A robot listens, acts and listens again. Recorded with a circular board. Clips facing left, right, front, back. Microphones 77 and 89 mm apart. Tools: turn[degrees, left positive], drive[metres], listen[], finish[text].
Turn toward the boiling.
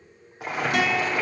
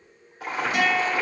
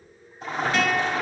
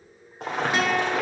Thought: The boiling: 165° left.
Action: turn[165]
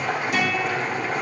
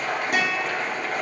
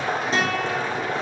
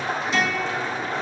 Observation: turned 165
Action: finish[Found it: boiling, straight ahead.]